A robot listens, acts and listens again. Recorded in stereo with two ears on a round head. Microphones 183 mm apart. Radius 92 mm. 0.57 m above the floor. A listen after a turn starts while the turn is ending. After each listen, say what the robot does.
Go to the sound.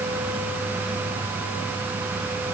Keep listening.
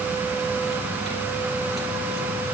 Keep listening.
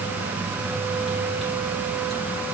I can't make out anything.